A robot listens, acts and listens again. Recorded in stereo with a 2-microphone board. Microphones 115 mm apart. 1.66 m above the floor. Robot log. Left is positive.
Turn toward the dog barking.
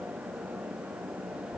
cmd idle
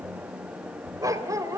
note: The dog barking: about 30° right or 150° right.
cmd yaw -30
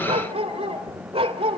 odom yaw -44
note: So it is at 125° right.
cmd yaw -125
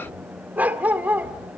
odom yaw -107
note: The dog barking is now 15° right.
cmd yaw -15
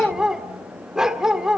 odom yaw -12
end: Found it: a dog barking, straight ahead.